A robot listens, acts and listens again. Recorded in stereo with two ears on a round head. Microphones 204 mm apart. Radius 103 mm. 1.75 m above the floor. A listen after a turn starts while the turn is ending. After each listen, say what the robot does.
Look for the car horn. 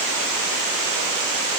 Keep listening.
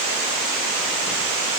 Keep listening.
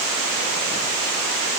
I can't make out a car horn.